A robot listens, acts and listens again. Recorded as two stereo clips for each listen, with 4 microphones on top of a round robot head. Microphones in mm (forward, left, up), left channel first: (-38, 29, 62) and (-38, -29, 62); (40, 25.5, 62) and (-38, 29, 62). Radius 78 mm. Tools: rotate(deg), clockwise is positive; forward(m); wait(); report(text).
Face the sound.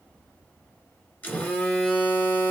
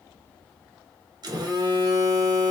rotate(-150)
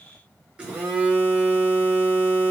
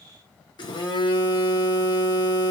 rotate(15)
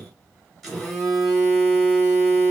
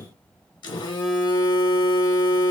report("Found it: a phone buzzing, straight ahead, 1 to 2 m away.")